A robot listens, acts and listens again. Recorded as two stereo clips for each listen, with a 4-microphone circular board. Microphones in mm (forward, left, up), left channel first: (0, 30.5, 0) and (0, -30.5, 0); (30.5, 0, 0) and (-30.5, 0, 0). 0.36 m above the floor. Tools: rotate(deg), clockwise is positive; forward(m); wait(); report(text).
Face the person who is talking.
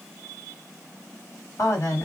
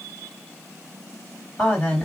rotate(-70)
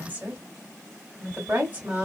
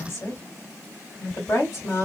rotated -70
rotate(30)
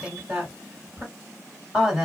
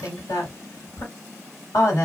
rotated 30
rotate(10)
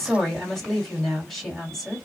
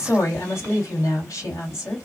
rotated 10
report("Facing the woman speaking.")